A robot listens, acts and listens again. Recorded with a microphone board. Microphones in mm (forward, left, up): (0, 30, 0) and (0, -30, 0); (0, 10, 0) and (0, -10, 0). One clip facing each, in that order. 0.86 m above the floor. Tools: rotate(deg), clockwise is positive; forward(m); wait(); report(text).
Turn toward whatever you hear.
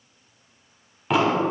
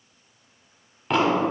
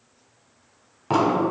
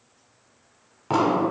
rotate(-30)
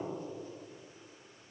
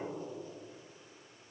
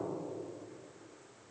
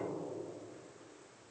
wait()
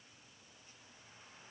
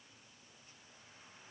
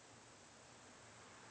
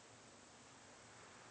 report("I heard an explosion, but can't make it out now. It was about 30° right or 150° left.")